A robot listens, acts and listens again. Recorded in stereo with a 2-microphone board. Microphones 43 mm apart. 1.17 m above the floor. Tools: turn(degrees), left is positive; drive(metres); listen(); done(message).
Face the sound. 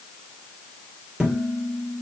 turn(degrees=-15)
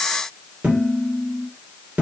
turn(degrees=-150)
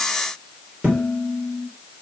turn(degrees=-35)
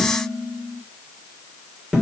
turn(degrees=-10)
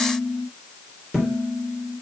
done("Facing the dishes clattering, 2 to 4 m away.")